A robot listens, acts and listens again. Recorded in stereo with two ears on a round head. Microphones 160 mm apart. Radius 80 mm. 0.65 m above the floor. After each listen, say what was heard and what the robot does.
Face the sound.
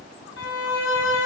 Turn 90° left.
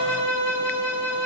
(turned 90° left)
So it is at 10° left. Turn 10° left.
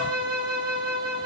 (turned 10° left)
Facing the violin.